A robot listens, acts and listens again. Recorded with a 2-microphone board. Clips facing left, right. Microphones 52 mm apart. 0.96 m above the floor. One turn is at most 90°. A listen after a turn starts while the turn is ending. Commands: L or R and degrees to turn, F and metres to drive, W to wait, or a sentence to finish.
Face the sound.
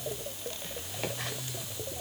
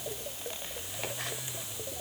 W
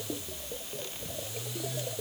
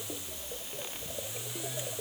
W
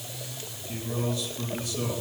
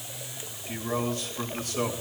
R45
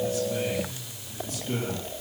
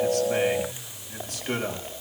R85
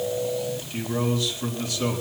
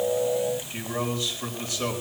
R25
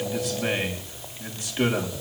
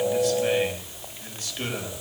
L20
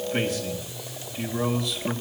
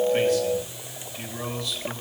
Facing the man speaking.